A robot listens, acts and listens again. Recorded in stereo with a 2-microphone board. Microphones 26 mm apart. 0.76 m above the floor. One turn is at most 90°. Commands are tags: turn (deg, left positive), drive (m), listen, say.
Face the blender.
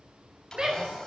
<turn deg="25"/>
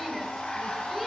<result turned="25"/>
<turn deg="90"/>
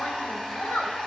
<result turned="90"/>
<turn deg="25"/>
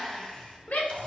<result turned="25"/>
<turn deg="25"/>
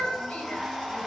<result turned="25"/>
<turn deg="10"/>
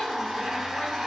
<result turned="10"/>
<say>Found it: a blender, straight ahead.</say>